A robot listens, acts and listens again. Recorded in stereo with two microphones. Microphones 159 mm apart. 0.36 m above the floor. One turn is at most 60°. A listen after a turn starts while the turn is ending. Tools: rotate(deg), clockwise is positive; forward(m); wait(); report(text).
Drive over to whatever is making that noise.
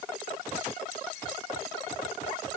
wait()
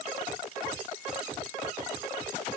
wait()
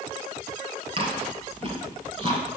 rotate(35)
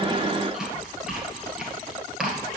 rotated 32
forward(1.0)
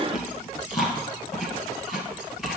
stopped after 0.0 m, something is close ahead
report("Something is in my way. I am facing the chewing but have not reached it.")